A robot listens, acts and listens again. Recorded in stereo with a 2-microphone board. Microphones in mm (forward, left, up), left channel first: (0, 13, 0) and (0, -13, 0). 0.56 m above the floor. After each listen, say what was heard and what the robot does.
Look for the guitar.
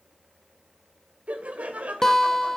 The guitar: about 20° left or 160° left. Turn 20° left.
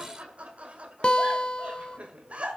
So it is at 135° left. Turn 135° left.
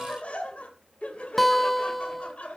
Facing the guitar, 1 to 2 m away.